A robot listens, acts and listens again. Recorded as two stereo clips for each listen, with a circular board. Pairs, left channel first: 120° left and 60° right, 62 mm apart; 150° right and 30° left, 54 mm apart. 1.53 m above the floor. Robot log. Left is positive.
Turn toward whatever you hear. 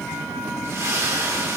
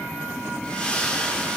note: The splash: 85° right.
cmd yaw -85
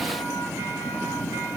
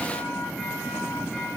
end: Facing where the splash came from. I can't hear it now.